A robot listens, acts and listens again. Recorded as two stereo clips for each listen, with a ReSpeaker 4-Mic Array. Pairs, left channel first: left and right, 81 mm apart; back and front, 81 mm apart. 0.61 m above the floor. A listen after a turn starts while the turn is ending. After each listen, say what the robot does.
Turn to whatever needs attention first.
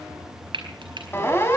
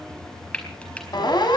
Turn 150° left.
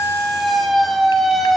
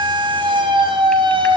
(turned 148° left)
Facing the siren.